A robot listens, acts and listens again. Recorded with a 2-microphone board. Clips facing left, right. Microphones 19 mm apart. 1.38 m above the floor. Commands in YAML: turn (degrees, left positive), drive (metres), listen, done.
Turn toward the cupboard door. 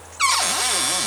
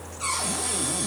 turn: 65
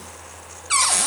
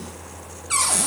turn: 15
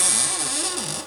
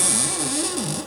done: "Facing the cupboard door."